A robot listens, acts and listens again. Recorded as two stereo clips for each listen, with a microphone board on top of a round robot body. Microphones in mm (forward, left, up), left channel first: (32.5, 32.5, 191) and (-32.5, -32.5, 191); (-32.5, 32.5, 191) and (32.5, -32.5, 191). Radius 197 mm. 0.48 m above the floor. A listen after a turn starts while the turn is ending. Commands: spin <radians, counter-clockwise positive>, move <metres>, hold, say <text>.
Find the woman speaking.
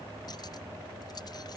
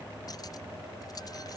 hold
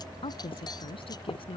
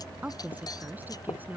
spin 0.44
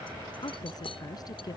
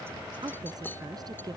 say Found it: a woman speaking, straight ahead.